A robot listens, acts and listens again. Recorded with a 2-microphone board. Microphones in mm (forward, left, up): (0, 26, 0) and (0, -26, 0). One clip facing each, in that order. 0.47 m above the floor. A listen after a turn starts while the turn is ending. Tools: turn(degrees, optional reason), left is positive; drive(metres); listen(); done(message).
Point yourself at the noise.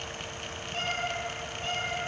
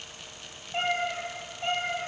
turn(degrees=-30, reason="The cat meowing: about 30° right or 150° right.")
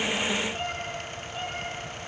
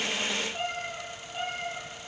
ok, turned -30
done("Found it: a cat meowing, straight ahead.")